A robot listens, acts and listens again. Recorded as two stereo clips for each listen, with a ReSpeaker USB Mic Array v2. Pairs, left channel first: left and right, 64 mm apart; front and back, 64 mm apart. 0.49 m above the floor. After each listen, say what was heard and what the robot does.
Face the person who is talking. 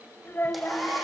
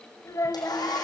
The child speaking: 30° left. Turn 30° left.
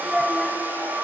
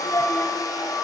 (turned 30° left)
Keep listening.
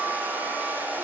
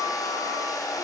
Keep listening.
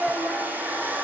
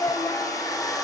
Facing the child speaking.